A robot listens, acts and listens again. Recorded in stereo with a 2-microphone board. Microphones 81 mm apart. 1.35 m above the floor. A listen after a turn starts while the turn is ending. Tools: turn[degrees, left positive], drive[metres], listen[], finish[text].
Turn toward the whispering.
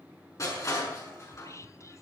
Thought: The whispering: about 40° left or 140° left.
Action: turn[40]
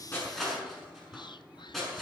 Thought: So it is at 100° left.
Action: turn[100]
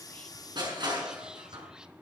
Action: listen[]
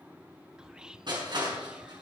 Thought: The whispering is now 10° right.
Action: turn[-10]
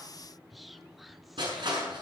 Action: finish[Facing the whispering.]